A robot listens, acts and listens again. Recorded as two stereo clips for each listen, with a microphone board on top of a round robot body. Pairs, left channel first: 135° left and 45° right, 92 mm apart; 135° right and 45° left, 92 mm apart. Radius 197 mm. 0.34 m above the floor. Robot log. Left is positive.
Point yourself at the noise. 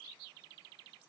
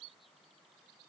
cmd idle
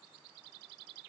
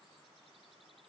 cmd idle
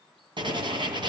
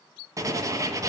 note: The writing: 10° right.
cmd yaw -10
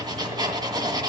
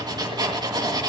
end: Facing the writing.